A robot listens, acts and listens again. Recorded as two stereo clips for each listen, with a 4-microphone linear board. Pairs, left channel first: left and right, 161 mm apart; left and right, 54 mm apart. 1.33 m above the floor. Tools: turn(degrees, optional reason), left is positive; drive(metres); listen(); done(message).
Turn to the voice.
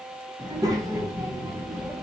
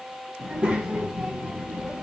turn(degrees=-20, reason="The child speaking: about 20° right or 160° right.")
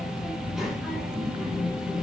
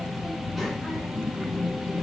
done("Found it: a child speaking, straight ahead, under 1 m away.")